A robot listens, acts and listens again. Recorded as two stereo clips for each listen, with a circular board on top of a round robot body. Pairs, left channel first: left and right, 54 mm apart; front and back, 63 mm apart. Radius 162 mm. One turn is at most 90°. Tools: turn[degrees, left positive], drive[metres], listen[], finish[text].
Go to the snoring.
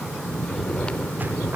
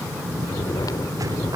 Thought: The snoring: 15° left.
Action: turn[15]
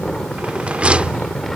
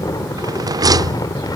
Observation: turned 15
Action: drive[1.0]
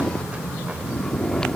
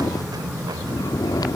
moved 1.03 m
Thought: The snoring is now 10° left.
Action: turn[10]
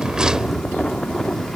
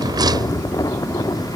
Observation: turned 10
Action: drive[1.0]
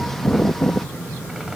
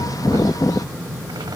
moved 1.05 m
Action: drive[1.0]
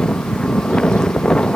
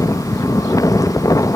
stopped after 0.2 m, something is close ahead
Thought: The snoring is now 10° left.
Action: turn[10]
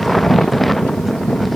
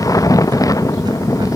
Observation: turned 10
Action: finish[Arrived at the snoring, straight ahead.]